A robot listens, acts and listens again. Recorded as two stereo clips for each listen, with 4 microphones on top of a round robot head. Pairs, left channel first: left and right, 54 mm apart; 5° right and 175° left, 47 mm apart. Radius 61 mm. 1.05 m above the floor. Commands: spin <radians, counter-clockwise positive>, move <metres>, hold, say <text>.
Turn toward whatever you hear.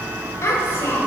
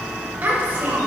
spin 2.27
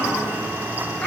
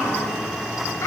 spin 0.35
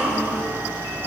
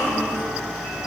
say Found it: a child speaking, straight ahead, over 4 m away.